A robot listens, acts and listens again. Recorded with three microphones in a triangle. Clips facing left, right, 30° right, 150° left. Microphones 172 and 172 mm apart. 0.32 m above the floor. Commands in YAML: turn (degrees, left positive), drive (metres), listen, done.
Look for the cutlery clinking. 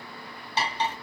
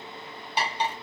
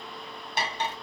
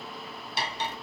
turn: -10
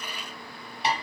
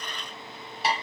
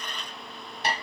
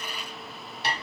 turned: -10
done: "Found it: cutlery clinking, straight ahead, 1 to 2 m away."